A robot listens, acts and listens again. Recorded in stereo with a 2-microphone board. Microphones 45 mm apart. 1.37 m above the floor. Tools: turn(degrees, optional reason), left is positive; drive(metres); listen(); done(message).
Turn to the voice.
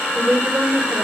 turn(degrees=-30, reason="The woman speaking: about 30° right or 150° right.")
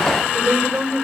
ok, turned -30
turn(degrees=-120, reason="So it is at 120° right.")
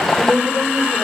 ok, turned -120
turn(degrees=-25, reason="The woman speaking is now 25° right.")
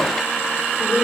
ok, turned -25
done("Found it: a woman speaking, straight ahead.")